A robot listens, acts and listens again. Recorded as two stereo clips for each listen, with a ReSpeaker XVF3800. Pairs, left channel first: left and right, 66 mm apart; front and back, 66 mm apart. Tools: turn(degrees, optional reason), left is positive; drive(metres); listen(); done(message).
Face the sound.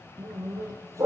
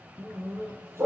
turn(degrees=-130, reason="The dog barking: 130° right.")
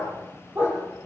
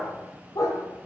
turn(degrees=-30, reason="The dog barking is now 30° right.")
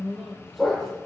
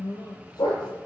done("Found it: a dog barking, straight ahead.")